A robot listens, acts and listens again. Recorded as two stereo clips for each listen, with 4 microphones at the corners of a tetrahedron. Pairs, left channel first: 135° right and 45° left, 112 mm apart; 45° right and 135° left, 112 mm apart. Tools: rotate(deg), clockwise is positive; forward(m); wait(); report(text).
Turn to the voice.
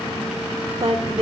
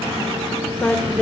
rotate(-30)
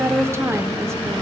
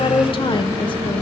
rotate(20)
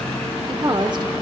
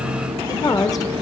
report("Found it: a woman speaking, straight ahead.")